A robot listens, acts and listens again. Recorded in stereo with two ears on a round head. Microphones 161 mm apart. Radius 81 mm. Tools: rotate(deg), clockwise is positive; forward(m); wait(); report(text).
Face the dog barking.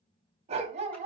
rotate(40)
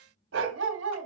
rotate(100)
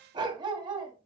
rotate(25)
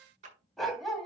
report("Facing the dog barking.")